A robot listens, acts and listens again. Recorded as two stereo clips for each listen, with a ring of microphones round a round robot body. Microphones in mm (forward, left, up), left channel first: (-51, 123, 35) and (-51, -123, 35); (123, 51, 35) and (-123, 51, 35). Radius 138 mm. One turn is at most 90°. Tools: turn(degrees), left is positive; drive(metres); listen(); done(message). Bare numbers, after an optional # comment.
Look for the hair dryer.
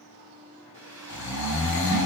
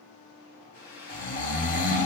# The hair dryer: 40° right.
turn(-40)
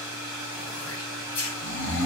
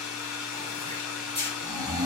done("Found it: a hair dryer, straight ahead.")